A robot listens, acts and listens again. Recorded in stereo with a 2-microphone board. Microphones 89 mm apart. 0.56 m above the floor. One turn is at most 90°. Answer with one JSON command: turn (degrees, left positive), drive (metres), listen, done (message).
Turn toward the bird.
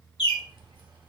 {"turn": 70}
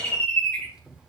{"turn": 15}
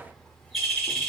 {"done": "Found it: a bird, straight ahead."}